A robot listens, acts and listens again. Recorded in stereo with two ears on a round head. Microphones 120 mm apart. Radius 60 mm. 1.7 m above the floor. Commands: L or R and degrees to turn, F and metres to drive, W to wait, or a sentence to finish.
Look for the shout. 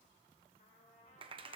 W
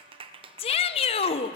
L45
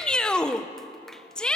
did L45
L10
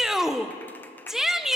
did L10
Facing the shout, under 1 m away.